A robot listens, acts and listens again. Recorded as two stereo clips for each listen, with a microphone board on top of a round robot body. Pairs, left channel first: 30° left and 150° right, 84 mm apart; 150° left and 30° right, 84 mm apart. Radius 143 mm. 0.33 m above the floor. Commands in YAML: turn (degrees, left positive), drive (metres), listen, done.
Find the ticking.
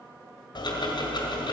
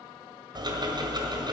done: "Found it: ticking, straight ahead, 1 to 2 m away."